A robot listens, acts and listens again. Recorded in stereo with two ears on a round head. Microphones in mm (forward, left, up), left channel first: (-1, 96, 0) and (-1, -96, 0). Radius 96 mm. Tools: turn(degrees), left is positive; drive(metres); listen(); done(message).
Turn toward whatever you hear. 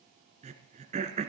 turn(degrees=-35)
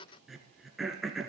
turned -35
done("Found it: throat clearing, straight ahead, 1 to 2 m away.")